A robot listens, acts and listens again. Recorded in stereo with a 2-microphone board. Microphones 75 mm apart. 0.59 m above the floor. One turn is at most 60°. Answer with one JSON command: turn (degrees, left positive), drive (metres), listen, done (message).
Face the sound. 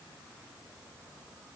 {"listen": true}
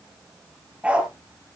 {"turn": -15}
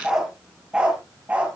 {"turn": -20}
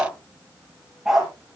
{"turn": -30}
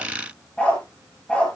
{"turn": 10}
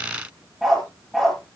{"done": "Facing the dog barking, over 4 m away."}